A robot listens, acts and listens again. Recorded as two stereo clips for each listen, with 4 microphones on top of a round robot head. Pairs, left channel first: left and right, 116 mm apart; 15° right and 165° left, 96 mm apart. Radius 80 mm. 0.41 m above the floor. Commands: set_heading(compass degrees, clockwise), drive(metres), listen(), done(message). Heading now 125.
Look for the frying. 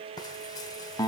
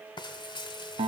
set_heading(95)
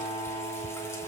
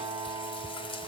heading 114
set_heading(94)
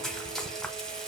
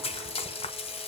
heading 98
done("Found it: frying, straight ahead, under 1 m away.")